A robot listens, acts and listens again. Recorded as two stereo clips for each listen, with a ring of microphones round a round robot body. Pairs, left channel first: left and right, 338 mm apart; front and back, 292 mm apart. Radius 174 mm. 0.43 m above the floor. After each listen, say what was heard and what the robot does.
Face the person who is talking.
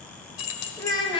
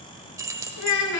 The child speaking: 15° left. Turn 15° left.
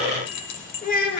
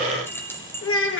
The child speaking is now 40° left. Turn 40° left.
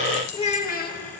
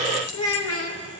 The child speaking is now 35° left. Turn 35° left.
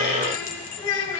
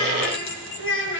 The child speaking is now 50° left. Turn 50° left.
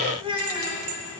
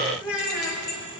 The child speaking is now 15° right. Turn 15° right.
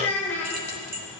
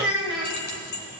Facing the child speaking.